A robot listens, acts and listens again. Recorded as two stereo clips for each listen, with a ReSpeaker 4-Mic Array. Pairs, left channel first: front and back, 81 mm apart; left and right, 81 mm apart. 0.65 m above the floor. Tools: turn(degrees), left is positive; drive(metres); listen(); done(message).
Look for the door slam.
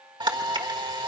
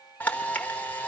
listen()
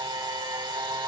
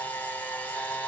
listen()
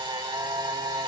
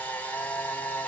done("I can't make out a door slam to turn to.")